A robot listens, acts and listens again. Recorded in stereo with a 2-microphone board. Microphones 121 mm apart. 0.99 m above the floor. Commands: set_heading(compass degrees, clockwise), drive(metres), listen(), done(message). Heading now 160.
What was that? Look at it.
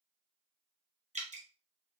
set_heading(235)
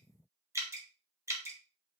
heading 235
set_heading(260)
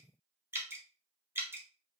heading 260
set_heading(280)
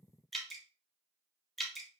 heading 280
done("Facing the dripping.")